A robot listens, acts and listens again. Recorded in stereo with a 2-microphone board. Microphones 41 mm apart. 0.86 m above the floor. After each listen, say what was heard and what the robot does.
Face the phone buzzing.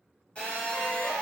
The phone buzzing: about 25° left or 155° left. Turn 25° left.
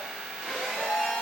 Facing the phone buzzing.